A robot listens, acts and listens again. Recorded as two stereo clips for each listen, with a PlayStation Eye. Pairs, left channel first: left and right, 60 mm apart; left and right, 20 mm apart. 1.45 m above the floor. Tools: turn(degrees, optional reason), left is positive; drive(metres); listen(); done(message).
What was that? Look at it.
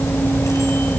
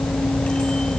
listen()
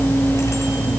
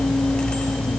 listen()
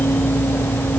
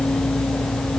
done("I can't make out anything to turn to.")